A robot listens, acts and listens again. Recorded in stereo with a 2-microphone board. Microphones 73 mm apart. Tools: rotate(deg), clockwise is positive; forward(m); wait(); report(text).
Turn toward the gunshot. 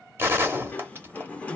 rotate(30)
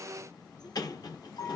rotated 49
wait()
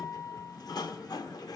report("I heard a gunshot, but can't make it out now. It was about 15° left or 100° right.")